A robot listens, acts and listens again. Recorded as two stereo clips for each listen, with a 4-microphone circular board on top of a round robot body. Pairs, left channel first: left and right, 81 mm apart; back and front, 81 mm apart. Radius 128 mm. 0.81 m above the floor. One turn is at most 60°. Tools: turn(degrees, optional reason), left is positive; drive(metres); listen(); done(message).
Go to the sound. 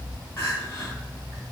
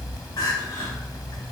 turn(degrees=60, reason="The crying: 145° left.")
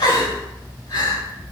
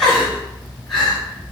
turn(degrees=60, reason="The crying is now 95° left.")
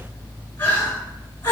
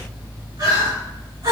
turn(degrees=30, reason="The crying is now 30° left.")
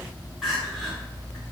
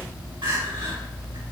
drive(metres=1.0)
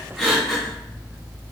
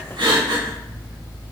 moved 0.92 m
drive(metres=1.0)
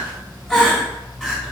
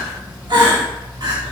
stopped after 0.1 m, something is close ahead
done("Arrived at the crying, straight ahead.")